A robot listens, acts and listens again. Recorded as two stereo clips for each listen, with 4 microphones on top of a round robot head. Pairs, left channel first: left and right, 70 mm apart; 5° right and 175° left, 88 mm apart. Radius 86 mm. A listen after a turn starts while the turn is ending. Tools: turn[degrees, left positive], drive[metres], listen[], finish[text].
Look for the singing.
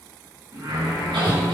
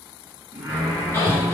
Thought: The singing: 125° right.
Action: turn[-125]
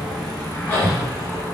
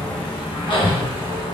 Action: listen[]
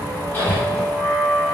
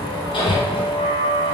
Thought: The singing is now 30° right.
Action: turn[-30]
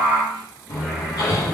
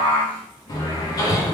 Action: listen[]
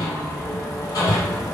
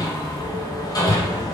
Action: listen[]
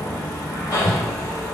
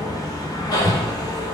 Action: finish[I heard singing from this way, but can't make it out now.]